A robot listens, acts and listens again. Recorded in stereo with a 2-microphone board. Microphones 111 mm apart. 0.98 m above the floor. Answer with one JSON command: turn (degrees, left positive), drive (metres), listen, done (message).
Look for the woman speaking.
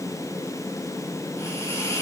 {"listen": true}
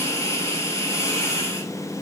{"listen": true}
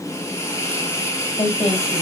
{"turn": 65}
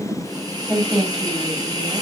{"done": "Found it: a woman speaking, straight ahead, over 4 m away."}